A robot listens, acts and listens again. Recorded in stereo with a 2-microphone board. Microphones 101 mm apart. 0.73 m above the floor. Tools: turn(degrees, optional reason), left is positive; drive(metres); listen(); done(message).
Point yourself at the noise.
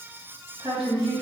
turn(degrees=-65, reason="The woman speaking: about 65° right or 115° right.")
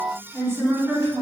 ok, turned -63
turn(degrees=-30, reason="So it is at 30° right.")
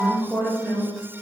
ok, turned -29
done("Found it: a woman speaking, straight ahead.")